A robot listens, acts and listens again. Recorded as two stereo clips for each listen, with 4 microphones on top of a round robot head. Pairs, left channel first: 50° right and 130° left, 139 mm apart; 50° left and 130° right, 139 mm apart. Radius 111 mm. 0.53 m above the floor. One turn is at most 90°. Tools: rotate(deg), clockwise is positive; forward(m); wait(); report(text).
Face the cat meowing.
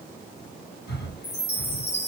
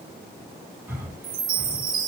wait()
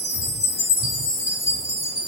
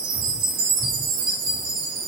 wait()
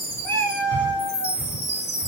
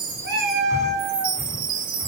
rotate(90)
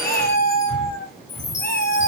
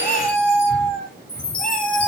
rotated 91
rotate(35)
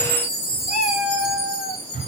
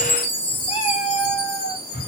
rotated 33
report("Found it: a cat meowing, straight ahead, over 4 m away.")